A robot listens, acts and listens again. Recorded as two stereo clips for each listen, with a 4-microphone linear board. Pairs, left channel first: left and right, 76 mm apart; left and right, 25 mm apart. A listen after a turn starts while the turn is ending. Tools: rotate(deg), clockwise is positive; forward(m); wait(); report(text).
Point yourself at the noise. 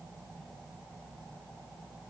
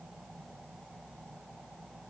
wait()
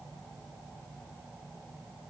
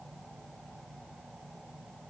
wait()
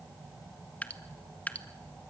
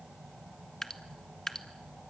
rotate(-20)
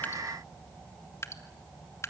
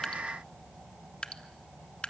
rotate(-140)
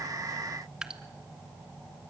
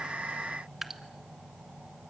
rotate(10)
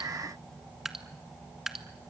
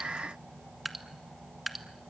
report("Found it: dripping, straight ahead, 1 to 2 m away.")